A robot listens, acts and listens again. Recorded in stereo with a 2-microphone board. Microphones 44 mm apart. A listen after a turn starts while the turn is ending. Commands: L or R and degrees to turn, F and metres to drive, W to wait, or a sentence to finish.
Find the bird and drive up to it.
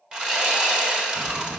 L30
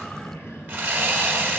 L120
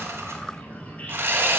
L35
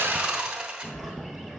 F1.0
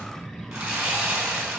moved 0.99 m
L15
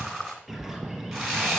F1.0
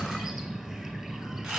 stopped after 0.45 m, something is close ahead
I am next to the bird.